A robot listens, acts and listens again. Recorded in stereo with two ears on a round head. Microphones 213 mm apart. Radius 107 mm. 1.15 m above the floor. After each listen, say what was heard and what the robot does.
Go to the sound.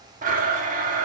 The blender: about 35° right or 145° right. Turn 35° right.
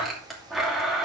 Drive 1.0 m forward.
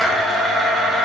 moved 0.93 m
Drive 1.0 m forward.
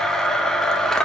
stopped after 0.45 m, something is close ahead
Arrived at the blender, straight ahead.